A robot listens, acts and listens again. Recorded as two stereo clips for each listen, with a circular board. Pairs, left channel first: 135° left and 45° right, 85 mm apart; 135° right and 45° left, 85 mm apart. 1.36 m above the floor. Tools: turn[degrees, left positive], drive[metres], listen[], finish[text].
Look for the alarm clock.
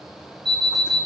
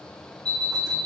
Thought: The alarm clock: 45° left.
Action: turn[45]
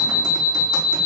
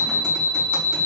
Thought: The alarm clock is now 20° left.
Action: turn[20]
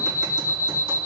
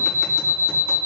Action: finish[Facing the alarm clock, 2 to 4 m away.]